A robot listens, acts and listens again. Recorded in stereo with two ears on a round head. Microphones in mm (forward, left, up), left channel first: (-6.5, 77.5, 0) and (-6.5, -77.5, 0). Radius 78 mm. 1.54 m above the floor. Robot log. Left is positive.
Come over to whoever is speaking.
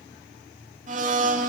cmd idle
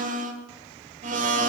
cmd idle
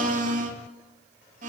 end: I can't make out anyone speaking to turn to.